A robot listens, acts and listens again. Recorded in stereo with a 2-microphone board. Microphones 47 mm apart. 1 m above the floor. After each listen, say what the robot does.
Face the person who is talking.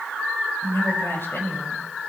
Turn 55° left.
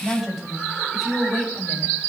Found it: a woman speaking, straight ahead.